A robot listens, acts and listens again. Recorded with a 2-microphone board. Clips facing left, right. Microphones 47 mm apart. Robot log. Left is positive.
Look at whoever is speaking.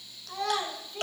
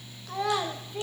cmd yaw -30
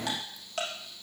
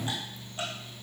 cmd idle
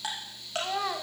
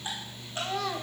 note: So it is at 15° left.
cmd yaw +15
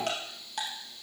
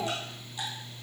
cmd idle
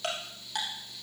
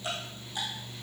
cmd idle
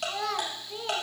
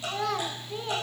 end: Found it: a child speaking, straight ahead.